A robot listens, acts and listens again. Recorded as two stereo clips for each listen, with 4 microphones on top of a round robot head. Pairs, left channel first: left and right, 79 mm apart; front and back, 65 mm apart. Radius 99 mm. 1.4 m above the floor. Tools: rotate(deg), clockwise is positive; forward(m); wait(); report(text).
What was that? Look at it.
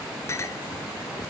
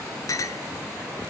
rotate(-30)
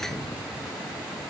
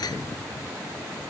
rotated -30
report("Found it: a clink, straight ahead.")